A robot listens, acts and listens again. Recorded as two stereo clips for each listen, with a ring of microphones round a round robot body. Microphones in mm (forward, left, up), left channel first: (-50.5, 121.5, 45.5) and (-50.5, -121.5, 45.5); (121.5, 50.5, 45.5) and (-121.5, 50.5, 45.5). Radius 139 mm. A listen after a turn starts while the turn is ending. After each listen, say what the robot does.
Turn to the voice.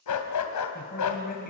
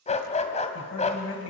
Turn 30° left.
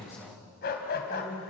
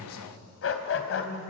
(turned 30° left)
Found it: a man speaking, straight ahead, over 4 m away.